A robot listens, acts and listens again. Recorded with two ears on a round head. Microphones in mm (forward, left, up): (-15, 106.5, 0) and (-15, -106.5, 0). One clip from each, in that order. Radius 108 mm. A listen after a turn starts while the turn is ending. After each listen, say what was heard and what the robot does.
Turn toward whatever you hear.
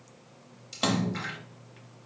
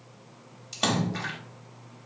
Turn 30° left.
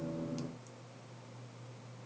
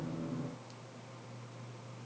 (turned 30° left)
Keep listening.
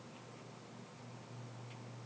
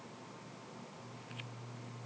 I heard a splash, but can't make it out now. It was about 30° right or 150° left.